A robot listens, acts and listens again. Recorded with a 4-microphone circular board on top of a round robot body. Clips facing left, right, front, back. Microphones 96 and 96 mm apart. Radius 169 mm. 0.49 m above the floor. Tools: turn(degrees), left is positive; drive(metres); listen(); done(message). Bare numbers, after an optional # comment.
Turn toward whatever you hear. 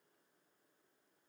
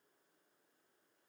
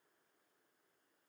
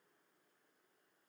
listen()
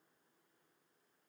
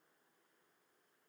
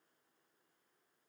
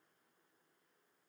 listen()
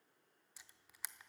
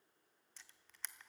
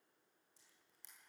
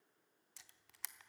# The camera shutter: 170° left.
turn(170)
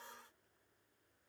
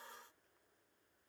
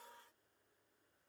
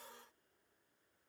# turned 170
listen()
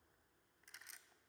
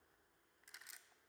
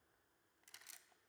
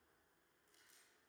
listen()
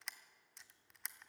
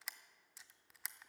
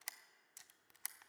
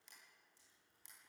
done("Facing the camera shutter, under 1 m away.")